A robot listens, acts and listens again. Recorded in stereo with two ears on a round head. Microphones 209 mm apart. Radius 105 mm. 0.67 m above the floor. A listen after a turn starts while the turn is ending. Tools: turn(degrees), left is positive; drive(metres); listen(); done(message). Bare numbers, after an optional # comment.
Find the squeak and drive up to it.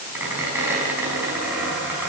turn(-30)
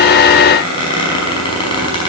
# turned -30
# So it is at 20° left.
turn(20)
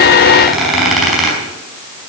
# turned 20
drive(1.0)
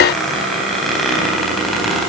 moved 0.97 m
drive(1.0)
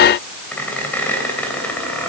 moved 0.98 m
drive(1.0)
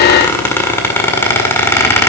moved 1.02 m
# The squeak is now 10° left.
turn(10)
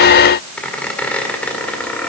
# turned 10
drive(1.0)
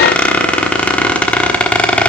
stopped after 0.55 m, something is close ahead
done("Arrived at the squeak, straight ahead.")